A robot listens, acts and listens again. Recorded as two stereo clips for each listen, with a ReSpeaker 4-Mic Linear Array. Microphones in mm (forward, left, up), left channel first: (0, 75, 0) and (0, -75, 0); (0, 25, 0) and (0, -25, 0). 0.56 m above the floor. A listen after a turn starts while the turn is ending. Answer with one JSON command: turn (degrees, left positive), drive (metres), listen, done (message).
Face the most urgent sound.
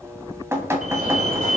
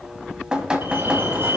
{"turn": -55}
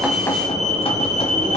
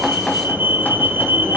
{"turn": -60}
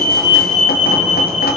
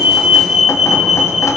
{"turn": -10}
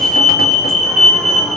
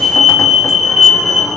{"done": "Facing the fire alarm, 2 to 4 m away."}